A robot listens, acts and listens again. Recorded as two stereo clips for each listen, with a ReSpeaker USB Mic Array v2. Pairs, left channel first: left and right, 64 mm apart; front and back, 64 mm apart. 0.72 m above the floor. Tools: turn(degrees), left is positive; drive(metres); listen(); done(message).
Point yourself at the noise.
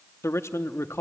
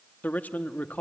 turn(degrees=60)
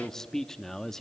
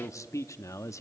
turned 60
turn(degrees=10)
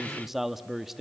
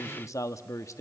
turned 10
done("Facing the man speaking.")